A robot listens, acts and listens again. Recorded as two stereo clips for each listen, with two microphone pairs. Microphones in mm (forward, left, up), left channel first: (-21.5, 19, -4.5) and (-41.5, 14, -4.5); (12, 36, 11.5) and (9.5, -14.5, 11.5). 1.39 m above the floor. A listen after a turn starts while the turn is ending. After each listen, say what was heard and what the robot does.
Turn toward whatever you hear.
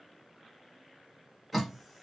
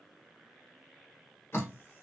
The dripping: 115° left. Turn 115° left.
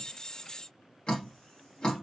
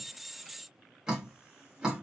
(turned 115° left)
The dripping is now 15° right. Turn 15° right.
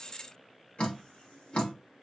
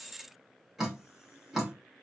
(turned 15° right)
Facing the dripping, 1 to 2 m away.